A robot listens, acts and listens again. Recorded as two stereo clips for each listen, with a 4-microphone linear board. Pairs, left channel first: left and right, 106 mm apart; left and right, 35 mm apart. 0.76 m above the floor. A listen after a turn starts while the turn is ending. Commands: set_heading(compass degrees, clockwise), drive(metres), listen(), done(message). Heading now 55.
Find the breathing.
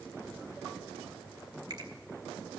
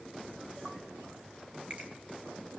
listen()
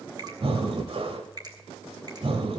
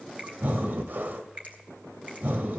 set_heading(120)
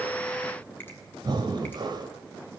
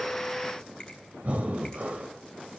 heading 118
set_heading(163)
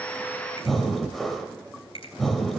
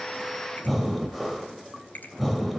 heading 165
done("Facing the breathing, 1 to 2 m away.")